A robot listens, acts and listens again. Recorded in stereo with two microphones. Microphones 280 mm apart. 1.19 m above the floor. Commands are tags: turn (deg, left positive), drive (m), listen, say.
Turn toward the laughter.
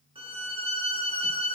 <listen/>
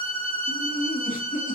<turn deg="25"/>
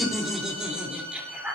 <say>Found it: laughter, straight ahead.</say>